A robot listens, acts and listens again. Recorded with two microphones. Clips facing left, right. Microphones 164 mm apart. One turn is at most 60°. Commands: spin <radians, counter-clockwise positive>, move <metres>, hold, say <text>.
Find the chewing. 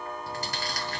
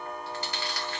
spin 0.70
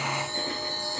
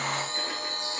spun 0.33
hold
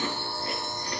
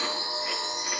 hold
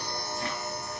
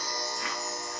say I heard chewing, but can't make it out now. It was about 20° left or 120° left.